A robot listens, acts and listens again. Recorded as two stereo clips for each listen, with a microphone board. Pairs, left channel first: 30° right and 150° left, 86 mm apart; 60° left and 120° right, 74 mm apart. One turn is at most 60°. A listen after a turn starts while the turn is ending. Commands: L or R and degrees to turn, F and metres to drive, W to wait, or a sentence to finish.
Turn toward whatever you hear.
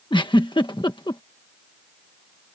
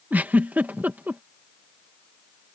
R55
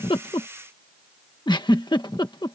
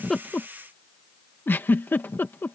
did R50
Facing the giggle.